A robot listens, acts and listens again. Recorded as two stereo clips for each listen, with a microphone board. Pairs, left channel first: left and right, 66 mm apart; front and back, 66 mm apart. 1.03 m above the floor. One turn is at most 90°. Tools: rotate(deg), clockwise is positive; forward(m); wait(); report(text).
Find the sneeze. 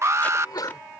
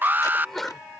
rotate(-85)
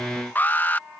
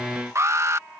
report("I heard a sneeze from this way, but can't make it out now.")